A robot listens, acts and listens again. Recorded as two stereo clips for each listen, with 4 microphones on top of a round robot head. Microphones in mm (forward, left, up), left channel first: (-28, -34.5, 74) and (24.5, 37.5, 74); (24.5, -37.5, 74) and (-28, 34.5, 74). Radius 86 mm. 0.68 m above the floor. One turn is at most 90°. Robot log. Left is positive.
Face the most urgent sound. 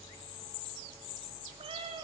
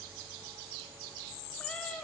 cmd idle
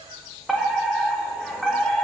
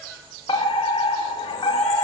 note: The fire alarm: 35° right.
cmd yaw -35
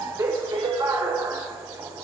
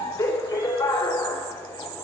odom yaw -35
end: Found it: a fire alarm, straight ahead.